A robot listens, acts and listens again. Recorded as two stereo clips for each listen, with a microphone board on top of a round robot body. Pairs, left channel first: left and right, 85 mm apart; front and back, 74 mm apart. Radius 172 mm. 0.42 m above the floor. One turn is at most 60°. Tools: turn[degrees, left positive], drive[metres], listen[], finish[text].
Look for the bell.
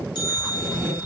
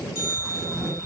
Thought: The bell: 55° left.
Action: turn[55]
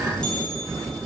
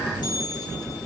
Thought: The bell is now 10° left.
Action: turn[10]
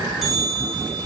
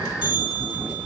Action: finish[Facing the bell.]